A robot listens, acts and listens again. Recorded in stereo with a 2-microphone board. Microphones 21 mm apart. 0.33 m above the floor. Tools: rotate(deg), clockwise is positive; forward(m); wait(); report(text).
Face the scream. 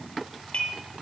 wait()
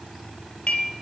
wait()
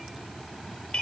report("I can't make out a scream, only dishes clattering.")